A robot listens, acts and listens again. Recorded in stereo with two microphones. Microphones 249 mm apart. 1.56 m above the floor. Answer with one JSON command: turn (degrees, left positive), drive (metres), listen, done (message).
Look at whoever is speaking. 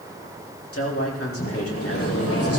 {"turn": 70}
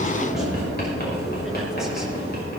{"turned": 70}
{"listen": true}
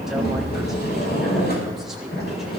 {"listen": true}
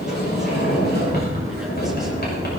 {"done": "I heard a man speaking, but can't make it out now. It was about straight ahead or 40° left."}